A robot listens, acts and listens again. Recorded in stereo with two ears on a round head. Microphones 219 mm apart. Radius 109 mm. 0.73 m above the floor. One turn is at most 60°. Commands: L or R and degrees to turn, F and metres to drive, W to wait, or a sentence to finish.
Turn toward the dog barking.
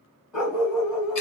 L30
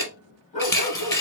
L60
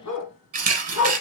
L60
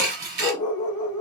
L15
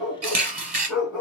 Found it: a dog barking, straight ahead, 1 to 2 m away.